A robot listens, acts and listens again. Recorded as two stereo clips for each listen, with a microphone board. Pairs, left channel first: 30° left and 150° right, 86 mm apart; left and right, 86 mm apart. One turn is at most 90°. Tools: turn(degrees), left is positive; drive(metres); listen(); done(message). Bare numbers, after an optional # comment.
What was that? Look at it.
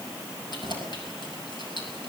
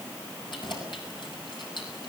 # The keys jangling: 60° left.
turn(60)
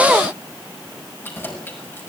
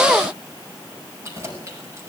# The keys jangling is now 35° right.
turn(-35)
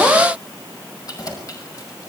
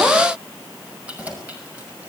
# The keys jangling is now 15° right.
turn(-15)
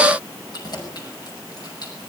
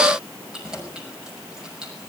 # The keys jangling is now 10° right.
turn(-10)
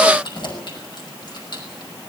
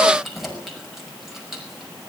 done("Found it: keys jangling, straight ahead.")